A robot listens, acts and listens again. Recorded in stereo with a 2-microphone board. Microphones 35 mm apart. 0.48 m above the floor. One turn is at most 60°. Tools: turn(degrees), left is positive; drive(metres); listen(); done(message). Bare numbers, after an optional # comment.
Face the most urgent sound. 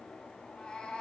listen()
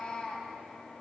listen()
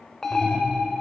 turn(30)
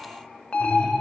# So it is at 135° left.
turn(60)
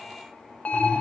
# The alarm is now 60° left.
turn(60)
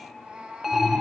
# The alarm is now 10° right.
turn(-10)
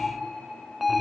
done("Facing the alarm, 1 to 2 m away.")